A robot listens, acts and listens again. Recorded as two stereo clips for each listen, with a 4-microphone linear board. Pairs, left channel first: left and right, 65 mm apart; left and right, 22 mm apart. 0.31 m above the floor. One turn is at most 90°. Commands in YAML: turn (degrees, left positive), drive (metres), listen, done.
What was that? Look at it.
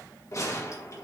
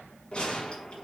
turn: 50
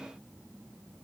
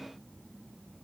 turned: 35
listen: true
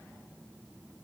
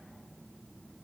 done: "I heard a gunshot, but can't make it out now. It was about 15° left or 95° left."